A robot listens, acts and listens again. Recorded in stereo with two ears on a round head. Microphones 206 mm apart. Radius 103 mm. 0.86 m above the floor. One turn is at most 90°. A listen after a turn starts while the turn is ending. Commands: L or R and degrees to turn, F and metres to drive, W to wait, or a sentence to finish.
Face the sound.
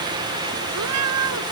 R90
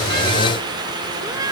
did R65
R15
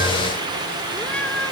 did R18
Found it: a cat meowing, straight ahead.